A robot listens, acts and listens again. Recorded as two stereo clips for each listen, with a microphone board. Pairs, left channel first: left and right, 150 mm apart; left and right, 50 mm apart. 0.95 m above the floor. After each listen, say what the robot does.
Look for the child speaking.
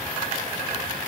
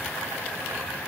Keep listening.
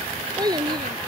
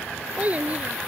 Turn 30° right.
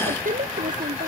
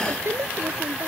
Turn 115° right.
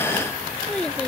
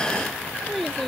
Facing the child speaking.